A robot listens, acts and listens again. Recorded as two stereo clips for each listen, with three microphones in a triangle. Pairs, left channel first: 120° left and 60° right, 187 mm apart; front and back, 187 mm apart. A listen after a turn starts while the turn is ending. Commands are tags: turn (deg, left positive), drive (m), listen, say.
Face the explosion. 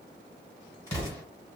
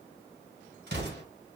<turn deg="-170"/>
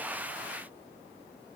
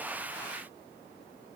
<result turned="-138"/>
<turn deg="-35"/>
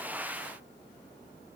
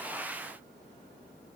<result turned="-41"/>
<say>Facing where the explosion came from. I can't hear it now.</say>